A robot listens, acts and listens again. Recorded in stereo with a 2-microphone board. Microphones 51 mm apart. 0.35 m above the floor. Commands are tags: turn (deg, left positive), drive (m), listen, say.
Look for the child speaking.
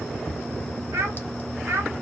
<turn deg="-50"/>
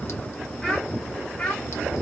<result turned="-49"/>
<turn deg="20"/>
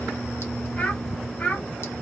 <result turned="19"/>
<turn deg="25"/>
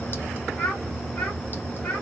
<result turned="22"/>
<turn deg="10"/>
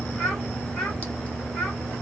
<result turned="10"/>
<say>Facing the child speaking.</say>